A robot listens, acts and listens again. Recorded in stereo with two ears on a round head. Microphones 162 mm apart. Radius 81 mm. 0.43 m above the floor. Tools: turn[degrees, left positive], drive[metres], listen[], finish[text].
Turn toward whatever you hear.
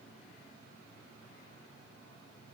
Action: listen[]
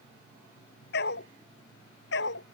Thought: The dog barking: about 70° left or 110° left.
Action: turn[70]
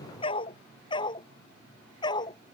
Thought: So it is at 25° left.
Action: turn[25]
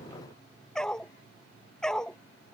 Action: finish[Facing the dog barking.]